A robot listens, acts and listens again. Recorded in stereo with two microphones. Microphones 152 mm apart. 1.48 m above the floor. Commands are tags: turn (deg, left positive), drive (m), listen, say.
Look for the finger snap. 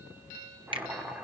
<turn deg="-30"/>
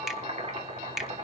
<say>Found it: a finger snap, straight ahead.</say>